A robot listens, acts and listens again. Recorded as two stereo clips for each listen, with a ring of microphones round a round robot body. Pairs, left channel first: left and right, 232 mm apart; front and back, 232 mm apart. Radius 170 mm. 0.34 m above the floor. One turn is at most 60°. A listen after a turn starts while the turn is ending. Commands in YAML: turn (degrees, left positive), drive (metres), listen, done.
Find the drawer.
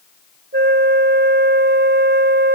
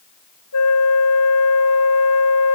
listen: true
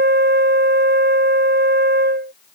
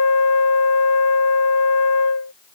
listen: true
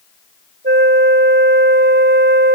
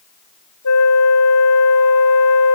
done: "I can't make out a drawer to turn to."